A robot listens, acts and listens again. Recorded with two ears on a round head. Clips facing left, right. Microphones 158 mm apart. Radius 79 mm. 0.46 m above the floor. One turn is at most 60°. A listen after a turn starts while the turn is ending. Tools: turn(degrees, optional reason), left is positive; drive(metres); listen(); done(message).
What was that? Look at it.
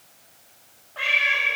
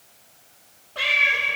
turn(degrees=-55, reason="The cat meowing: about 55° right or 125° right.")
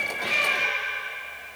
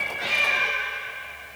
done("Facing the cat meowing, 2 to 4 m away.")